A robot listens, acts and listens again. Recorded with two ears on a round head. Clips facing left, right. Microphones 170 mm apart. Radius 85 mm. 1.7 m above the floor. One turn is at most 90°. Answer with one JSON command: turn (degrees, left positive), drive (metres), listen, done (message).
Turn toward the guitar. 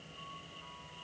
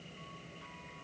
{"listen": true}
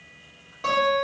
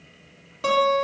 {"turn": -45}
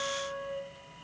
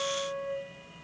{"done": "Found it: a guitar, straight ahead, 1 to 2 m away."}